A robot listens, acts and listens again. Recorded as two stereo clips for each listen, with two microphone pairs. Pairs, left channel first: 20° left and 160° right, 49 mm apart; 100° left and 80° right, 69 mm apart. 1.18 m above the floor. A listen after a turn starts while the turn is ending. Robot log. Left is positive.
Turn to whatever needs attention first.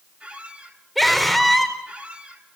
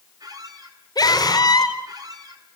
note: The scream: 110° left.
cmd yaw +110
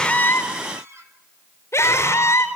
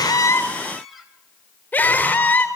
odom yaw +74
note: The scream is now 35° left.
cmd yaw +35
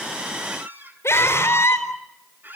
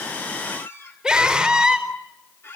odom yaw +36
end: Facing the scream, over 4 m away.